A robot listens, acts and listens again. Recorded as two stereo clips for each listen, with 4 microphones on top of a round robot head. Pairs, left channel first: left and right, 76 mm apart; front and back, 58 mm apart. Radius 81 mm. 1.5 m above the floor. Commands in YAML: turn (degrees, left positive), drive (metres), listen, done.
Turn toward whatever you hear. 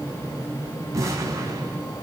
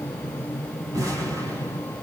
turn: -140
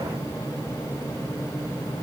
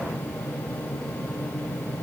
done: "Facing where the explosion came from. I can't hear it now."